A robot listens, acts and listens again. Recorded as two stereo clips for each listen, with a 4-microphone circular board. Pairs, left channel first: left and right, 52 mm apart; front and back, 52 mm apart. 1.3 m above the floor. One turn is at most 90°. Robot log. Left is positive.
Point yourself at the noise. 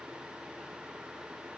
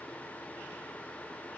cmd idle
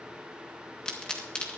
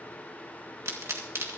note: The pop: 160° left.
cmd yaw +90
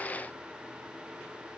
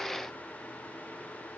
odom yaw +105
note: Nothing new. It was at 55° left.
cmd yaw +55
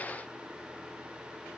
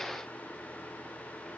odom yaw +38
note: Nothing new. It was at 20° left.
cmd yaw +20
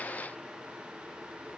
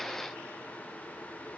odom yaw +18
end: I heard a pop from this way, but can't make it out now.